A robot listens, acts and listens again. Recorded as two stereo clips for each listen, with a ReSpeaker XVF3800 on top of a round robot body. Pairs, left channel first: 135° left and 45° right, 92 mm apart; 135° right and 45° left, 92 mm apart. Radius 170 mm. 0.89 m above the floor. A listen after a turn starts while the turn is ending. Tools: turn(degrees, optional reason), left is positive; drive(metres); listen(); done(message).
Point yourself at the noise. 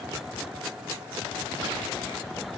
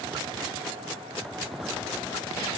listen()
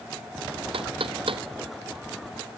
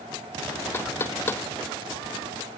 turn(degrees=-70, reason="The knocking: 70° right.")
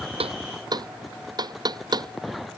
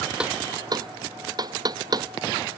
done("Facing the knocking.")